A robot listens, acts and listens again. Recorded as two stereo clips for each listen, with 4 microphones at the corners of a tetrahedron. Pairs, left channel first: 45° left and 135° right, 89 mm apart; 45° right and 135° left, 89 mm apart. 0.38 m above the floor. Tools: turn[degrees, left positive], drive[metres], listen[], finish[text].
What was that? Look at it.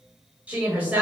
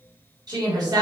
Thought: The woman speaking: 160° left.
Action: turn[160]
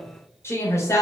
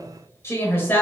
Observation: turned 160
Thought: The woman speaking is now 10° left.
Action: turn[10]
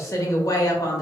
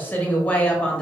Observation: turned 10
Thought: The woman speaking is now 30° left.
Action: turn[30]
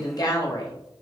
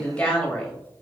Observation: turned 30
Thought: The woman speaking is now 35° left.
Action: turn[35]
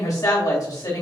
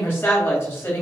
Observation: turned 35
Thought: The woman speaking is now 10° left.
Action: turn[10]
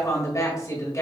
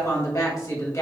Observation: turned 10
Action: finish[Facing the woman speaking.]